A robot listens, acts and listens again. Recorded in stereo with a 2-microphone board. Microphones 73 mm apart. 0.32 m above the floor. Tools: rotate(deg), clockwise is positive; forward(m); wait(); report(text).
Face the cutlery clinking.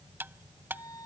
rotate(30)
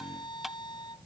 report("Found it: cutlery clinking, straight ahead.")